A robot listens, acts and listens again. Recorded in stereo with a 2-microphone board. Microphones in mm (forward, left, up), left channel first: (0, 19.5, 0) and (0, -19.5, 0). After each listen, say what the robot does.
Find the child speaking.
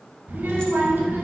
Turn 55° right.
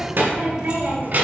Turn 50° right.
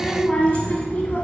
Turn 40° left.
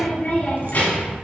Turn 55° left.
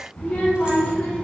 Turn 35° left.
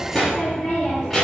Turn 10° left.
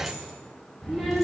Facing the child speaking, 1 to 2 m away.